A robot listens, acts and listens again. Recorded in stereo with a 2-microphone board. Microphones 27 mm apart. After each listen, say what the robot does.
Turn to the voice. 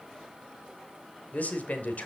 Turn 60° left.
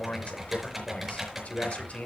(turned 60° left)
Turn 55° left.
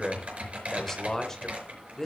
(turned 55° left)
Turn 15° left.
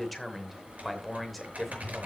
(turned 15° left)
Found it: a man speaking, straight ahead, 2 to 4 m away.